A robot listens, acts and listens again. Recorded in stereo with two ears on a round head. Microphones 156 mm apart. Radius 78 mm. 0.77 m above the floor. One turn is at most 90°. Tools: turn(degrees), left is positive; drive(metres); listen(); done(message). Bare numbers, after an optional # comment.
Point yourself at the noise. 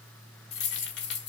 # The keys jangling: about 65° left or 115° left.
turn(65)
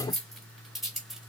done("Facing the keys jangling.")